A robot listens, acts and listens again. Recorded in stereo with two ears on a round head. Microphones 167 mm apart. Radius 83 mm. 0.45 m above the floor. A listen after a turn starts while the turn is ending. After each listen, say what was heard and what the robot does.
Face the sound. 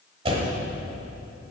The door slam: about 30° right or 150° right. Turn 30° right.
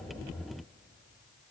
Keep listening.
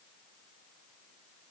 I heard a door slam, but can't make it out now. It was about straight ahead or 120° right.